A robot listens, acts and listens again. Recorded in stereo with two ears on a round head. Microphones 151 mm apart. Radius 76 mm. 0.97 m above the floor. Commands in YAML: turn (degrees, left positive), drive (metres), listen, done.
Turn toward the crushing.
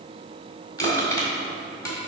turn: 20
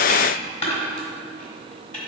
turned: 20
turn: 140
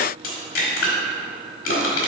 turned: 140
turn: 55
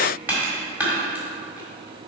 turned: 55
turn: -10
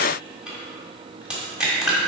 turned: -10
done: "Found it: crushing, straight ahead, 1 to 2 m away."